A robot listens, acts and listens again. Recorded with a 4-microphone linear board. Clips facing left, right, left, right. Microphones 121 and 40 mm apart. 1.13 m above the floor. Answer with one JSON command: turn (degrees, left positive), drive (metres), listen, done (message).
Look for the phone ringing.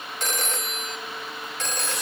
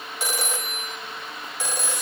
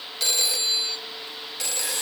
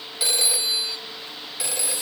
{"turn": -30}
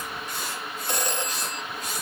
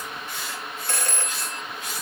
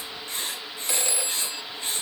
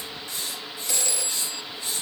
{"turn": 20}
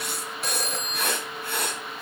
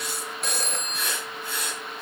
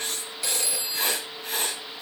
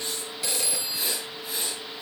{"done": "Found it: a phone ringing, straight ahead."}